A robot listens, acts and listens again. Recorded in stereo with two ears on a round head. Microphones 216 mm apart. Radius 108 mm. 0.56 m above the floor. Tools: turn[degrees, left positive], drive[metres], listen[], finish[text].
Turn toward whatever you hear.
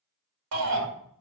Thought: The shout: about 70° right or 110° right.
Action: turn[-70]
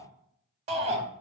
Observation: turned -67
Thought: So it is at 30° right.
Action: turn[-30]
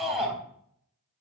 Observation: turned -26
Action: finish[Facing the shout, 2 to 4 m away.]